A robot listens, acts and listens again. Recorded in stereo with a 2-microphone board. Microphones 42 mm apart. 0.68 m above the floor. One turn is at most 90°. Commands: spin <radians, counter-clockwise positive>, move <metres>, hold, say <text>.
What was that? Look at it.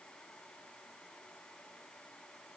hold
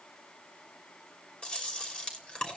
spin 0.44
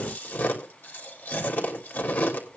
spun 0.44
spin 1.57
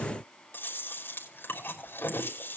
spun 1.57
spin 1.05
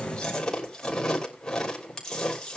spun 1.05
spin 0.26
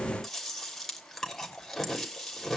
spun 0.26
say Facing the chewing.